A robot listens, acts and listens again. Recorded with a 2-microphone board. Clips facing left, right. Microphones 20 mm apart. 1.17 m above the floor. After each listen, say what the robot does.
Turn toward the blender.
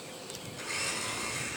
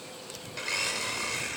Turn 60° right.
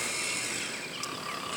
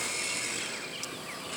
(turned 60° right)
Found it: a blender, straight ahead, 2 to 4 m away.